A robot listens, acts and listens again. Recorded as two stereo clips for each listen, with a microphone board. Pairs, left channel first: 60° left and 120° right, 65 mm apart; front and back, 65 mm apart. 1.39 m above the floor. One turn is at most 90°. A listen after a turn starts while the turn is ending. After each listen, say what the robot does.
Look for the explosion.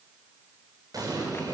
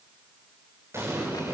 Turn 90° right.
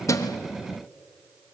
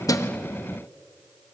Turn 40° right.
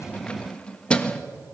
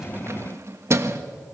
I heard an explosion from this way, but can't make it out now.